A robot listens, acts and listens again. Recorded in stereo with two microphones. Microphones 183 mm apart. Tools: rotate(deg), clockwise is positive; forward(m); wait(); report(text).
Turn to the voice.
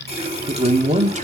rotate(40)
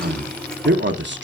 rotate(100)
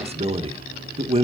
rotate(35)
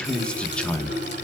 report("Facing the man speaking, 1 to 2 m away.")